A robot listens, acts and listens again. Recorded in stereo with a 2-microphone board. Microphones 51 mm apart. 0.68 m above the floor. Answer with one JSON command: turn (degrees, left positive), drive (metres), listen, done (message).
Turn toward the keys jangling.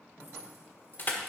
{"listen": true}
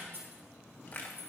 {"turn": -40}
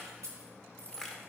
{"turn": -120}
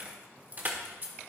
{"turn": -45}
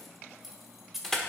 {"done": "Found it: keys jangling, straight ahead."}